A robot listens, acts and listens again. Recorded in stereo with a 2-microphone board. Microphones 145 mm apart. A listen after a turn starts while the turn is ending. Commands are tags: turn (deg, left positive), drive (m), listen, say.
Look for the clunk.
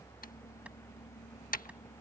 <listen/>
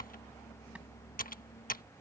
<listen/>
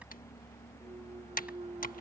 <turn deg="-40"/>
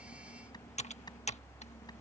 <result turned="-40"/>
<listen/>
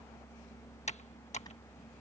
<say>I heard a clunk, but can't make it out now. It was about straight ahead or 100° right.</say>